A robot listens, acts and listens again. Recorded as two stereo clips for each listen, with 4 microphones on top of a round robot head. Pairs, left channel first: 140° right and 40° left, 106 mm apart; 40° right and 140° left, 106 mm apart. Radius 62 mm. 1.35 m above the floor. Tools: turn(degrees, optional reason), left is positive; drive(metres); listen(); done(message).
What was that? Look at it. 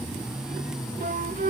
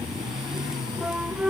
turn(degrees=55, reason="The flute: 55° left.")
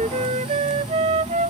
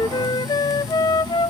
turn(degrees=10, reason="The flute is now 10° left.")
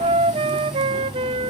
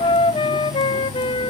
done("Facing the flute.")